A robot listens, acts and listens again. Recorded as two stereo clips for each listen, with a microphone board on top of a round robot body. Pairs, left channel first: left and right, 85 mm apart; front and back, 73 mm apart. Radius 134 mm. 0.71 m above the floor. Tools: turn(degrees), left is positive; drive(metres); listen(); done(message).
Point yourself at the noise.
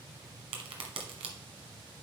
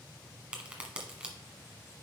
turn(degrees=-105)
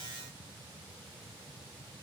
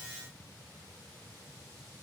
done("I heard a crack from this way, but can't make it out now.")